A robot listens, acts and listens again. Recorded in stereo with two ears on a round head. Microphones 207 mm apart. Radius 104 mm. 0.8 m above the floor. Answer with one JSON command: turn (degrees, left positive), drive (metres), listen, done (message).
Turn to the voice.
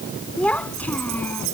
{"turn": 30}
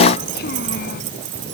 {"turn": 135}
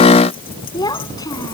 {"turn": 15}
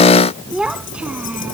{"done": "Found it: a child speaking, straight ahead."}